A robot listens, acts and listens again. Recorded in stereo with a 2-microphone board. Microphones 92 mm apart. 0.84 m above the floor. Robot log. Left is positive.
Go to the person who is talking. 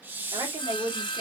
note: The woman speaking: about 75° right or 105° right.
cmd yaw -75
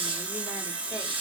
cmd idle
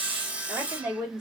note: So it is at 10° right.
cmd yaw -10
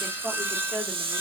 cmd fwd 1.0
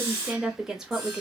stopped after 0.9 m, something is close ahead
end: I am next to the woman speaking.